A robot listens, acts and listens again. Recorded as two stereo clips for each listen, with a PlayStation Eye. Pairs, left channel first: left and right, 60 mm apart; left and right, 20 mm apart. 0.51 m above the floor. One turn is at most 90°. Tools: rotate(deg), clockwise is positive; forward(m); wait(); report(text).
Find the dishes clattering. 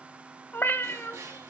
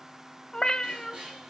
rotate(55)
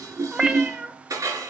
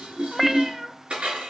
rotate(70)
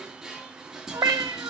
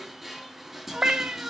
report("Facing the dishes clattering.")